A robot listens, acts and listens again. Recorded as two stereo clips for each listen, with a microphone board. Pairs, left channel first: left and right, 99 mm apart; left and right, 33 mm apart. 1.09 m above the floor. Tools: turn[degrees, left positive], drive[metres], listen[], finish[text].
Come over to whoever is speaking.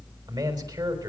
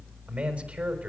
Thought: The man speaking: about 45° right or 135° right.
Action: turn[-45]
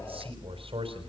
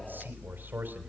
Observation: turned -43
Thought: So it is at 90° right.
Action: turn[-90]
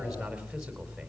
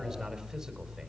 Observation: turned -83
Thought: Nothing new. It was at 10° right.
Action: turn[-10]
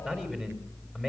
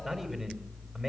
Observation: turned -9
Action: drive[1.0]
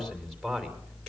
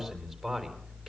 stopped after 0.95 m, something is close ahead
Action: finish[Blocked. The man speaking is further on, straight ahead.]